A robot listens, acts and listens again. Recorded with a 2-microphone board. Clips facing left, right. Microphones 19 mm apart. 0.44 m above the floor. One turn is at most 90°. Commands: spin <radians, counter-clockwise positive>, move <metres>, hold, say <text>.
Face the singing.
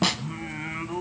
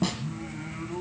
spin 0.70
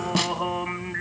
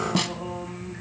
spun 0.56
spin 1.57
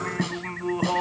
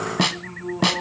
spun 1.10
spin 0.79
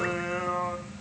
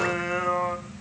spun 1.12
spin -0.35
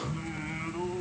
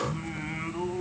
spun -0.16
spin -0.17
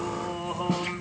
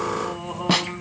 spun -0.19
say Found it: singing, straight ahead.